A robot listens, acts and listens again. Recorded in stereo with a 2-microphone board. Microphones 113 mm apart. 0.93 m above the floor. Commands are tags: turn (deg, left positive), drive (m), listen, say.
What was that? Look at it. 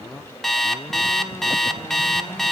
<turn deg="30"/>
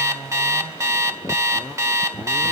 <turn deg="-30"/>
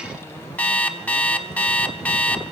<turn deg="15"/>
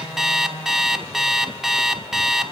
<say>Found it: an alarm clock, straight ahead.</say>